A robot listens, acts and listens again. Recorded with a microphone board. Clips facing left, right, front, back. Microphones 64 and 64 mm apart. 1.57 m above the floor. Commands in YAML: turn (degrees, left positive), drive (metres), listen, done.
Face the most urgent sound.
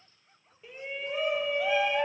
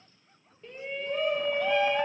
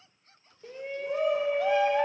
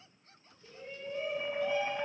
done: "Found it: a shout, straight ahead, 1 to 2 m away."